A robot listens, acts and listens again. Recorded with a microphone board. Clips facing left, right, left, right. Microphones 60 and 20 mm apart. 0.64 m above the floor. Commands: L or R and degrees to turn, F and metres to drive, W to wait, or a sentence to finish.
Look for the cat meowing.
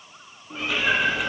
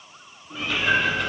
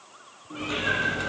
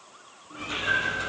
L30
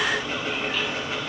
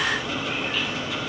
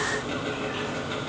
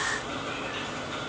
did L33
W
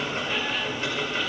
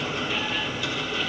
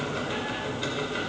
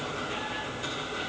W
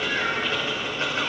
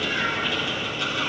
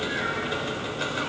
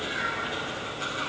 I heard a cat meowing, but can't make it out now. It was about straight ahead or 115° left.